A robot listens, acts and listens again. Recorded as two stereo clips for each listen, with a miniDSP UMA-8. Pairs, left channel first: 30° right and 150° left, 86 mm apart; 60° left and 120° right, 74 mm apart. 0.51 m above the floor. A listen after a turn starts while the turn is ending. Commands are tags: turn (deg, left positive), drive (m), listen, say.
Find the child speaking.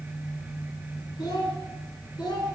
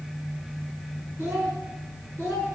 <turn deg="-65"/>
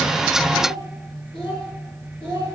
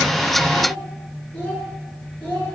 <say>Found it: a child speaking, straight ahead.</say>